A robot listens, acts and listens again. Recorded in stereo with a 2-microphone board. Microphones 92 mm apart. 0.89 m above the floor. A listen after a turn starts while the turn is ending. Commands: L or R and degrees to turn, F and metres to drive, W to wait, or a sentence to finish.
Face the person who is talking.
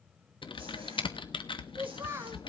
R30
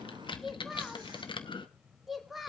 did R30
Facing the child speaking, 1 to 2 m away.